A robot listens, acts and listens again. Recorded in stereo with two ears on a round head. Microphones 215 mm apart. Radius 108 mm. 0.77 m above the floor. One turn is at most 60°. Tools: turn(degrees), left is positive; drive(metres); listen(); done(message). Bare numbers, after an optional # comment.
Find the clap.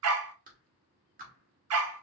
# The clap: about 35° right or 145° right.
turn(-35)
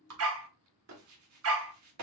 # So it is at 110° right.
turn(-60)
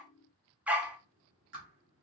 # The clap is now 50° right.
turn(-50)
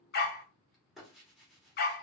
done("Facing the clap, 1 to 2 m away.")